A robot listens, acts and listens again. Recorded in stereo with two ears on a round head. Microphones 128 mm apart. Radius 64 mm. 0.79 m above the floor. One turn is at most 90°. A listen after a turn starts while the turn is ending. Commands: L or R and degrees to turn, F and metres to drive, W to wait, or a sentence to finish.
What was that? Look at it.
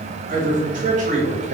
R50
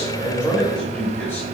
L15
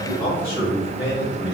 L30
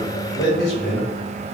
L25
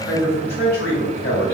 L20
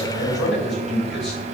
Facing the man speaking, 2 to 4 m away.